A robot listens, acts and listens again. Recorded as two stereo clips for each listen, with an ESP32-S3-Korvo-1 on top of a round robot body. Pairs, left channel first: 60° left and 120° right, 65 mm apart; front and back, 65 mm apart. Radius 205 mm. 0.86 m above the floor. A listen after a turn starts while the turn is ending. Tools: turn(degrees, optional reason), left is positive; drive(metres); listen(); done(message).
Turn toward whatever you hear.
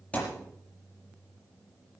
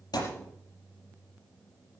turn(degrees=-15, reason="The thud: 15° right.")
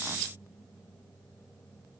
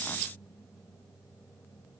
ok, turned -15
done("I heard a thud from this way, but can't make it out now.")